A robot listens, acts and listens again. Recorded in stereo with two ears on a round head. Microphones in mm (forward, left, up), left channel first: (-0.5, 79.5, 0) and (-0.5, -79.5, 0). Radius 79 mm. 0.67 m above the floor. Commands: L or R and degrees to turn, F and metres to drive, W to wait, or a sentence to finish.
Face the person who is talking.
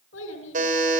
L90
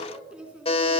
Facing the child speaking.